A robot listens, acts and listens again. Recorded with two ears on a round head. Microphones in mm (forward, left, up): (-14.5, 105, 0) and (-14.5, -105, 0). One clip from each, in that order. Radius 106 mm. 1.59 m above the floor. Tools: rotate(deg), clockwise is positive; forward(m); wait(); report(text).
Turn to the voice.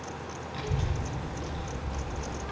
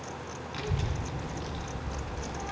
rotate(20)
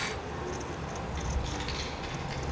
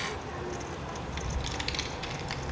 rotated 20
rotate(140)
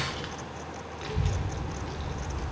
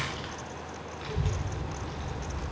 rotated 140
report("Found it: a child speaking, straight ahead.")